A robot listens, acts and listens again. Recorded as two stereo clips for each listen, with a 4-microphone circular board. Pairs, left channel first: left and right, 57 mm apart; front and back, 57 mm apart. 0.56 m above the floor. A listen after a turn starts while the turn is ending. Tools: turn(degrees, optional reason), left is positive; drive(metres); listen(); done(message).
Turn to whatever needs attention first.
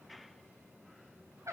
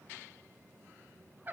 listen()
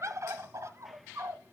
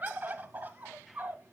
listen()
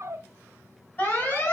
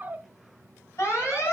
turn(degrees=35, reason="The alarm: 35° left.")
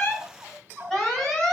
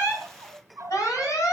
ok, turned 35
turn(degrees=10, reason="The alarm is now 10° left.")
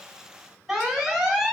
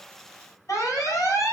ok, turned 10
done("Found it: an alarm, straight ahead, 2 to 4 m away.")